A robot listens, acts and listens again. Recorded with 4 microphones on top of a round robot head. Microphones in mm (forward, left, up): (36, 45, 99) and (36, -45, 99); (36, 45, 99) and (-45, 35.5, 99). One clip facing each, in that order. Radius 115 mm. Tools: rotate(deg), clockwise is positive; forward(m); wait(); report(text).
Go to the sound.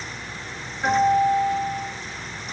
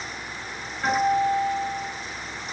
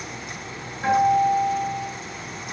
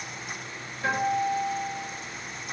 rotate(-10)
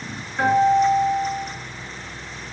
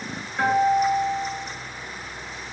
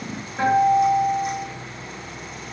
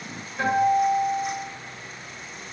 forward(1.0)
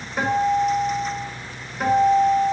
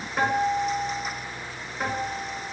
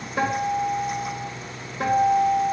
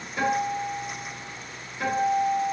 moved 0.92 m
forward(1.0)
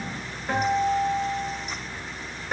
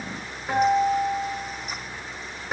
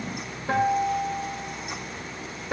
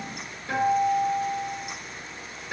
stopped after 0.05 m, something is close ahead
report("I am next to the guitar.")